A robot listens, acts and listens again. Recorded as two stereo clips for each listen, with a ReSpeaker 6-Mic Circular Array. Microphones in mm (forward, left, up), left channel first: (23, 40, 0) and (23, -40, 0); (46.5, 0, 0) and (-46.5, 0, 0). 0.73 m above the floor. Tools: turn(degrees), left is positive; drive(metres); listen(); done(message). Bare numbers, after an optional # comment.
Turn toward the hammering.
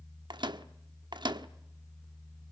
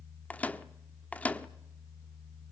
listen()
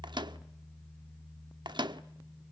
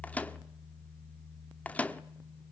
listen()
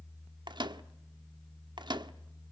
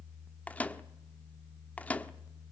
done("I can't make out hammering, only a microwave.")